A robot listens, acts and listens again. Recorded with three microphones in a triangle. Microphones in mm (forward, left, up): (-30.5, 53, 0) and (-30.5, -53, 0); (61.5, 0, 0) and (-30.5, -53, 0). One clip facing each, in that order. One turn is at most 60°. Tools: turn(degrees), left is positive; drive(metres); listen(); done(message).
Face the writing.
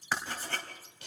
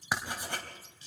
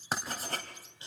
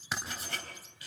turn(degrees=-15)
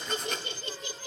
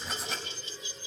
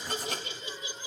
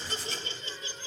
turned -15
done("Found it: writing, straight ahead, 2 to 4 m away.")